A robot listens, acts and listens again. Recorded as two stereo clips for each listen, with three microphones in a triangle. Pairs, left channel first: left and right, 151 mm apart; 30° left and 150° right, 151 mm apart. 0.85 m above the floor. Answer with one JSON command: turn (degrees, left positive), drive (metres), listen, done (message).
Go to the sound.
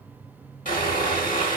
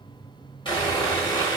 {"turn": 85}
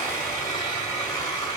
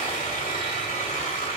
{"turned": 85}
{"turn": 25}
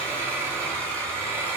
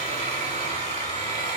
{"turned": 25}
{"turn": 10}
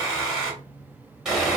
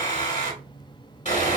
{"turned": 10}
{"drive": 1.0}
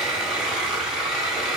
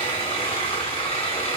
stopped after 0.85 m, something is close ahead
{"turn": -10}
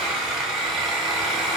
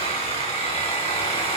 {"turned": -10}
{"done": "Arrived at the sawing, straight ahead."}